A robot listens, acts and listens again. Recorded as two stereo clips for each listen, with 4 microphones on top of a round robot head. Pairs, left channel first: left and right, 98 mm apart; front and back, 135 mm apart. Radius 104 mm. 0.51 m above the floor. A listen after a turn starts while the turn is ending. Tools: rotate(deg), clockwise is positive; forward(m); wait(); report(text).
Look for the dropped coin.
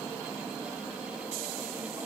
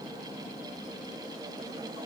wait()
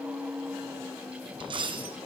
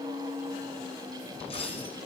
rotate(55)
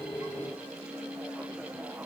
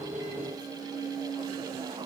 report("Facing where the dropped coin came from. I can't hear it now.")